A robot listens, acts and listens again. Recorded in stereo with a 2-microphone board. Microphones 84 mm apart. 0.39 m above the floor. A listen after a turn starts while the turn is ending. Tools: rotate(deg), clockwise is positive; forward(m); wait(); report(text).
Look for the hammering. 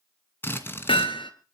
rotate(-90)
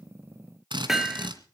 report("Facing the hammering.")